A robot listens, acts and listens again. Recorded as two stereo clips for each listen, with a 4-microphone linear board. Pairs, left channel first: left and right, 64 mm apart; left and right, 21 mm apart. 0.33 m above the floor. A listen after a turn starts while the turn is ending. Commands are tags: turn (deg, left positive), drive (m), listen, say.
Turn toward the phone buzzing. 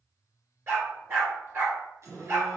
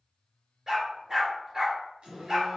<turn deg="-55"/>
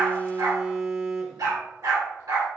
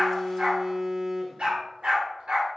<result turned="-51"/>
<turn deg="-20"/>
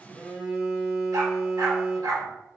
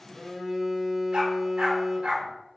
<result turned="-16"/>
<say>Found it: a phone buzzing, straight ahead, 1 to 2 m away.</say>